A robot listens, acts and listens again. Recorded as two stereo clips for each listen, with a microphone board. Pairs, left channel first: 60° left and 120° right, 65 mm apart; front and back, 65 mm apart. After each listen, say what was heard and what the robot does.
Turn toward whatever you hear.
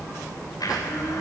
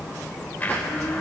The blender: 60° left. Turn 60° left.
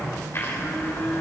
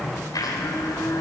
The blender is now 10° left. Turn 10° left.
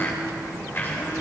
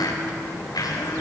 Found it: a blender, straight ahead, 2 to 4 m away.